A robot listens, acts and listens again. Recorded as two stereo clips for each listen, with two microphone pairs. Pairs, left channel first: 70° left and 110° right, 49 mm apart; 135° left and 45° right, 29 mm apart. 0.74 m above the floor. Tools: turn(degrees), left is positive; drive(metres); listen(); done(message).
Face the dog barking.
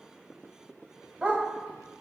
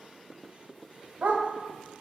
turn(degrees=-50)
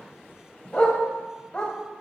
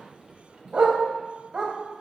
done("Facing the dog barking.")